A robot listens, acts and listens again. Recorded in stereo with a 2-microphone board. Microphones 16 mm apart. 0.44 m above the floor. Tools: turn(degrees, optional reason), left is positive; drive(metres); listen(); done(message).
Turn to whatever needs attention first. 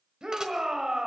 turn(degrees=-55, reason="The shout: about 55° right or 125° right.")
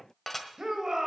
turn(degrees=-55, reason="So it is at 55° right.")
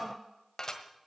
turn(degrees=-20, reason="The shout is now 20° right.")
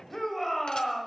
done("Facing the shout, 1 to 2 m away.")